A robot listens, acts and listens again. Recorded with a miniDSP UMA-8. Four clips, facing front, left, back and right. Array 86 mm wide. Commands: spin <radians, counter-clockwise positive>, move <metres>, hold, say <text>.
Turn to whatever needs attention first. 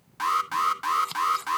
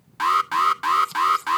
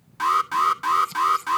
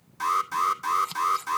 spin 1.66
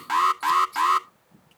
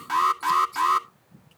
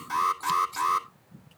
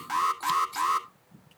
say Found it: an alarm, straight ahead.